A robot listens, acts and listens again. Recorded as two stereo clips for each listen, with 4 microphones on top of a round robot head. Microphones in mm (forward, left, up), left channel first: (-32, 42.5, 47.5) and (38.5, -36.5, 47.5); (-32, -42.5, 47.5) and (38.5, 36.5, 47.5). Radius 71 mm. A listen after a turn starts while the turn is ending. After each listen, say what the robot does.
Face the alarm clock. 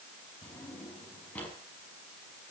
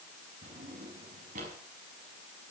Keep listening.
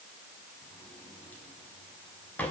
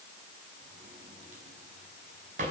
Keep listening.
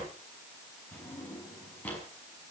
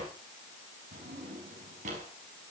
I can't make out an alarm clock to turn to.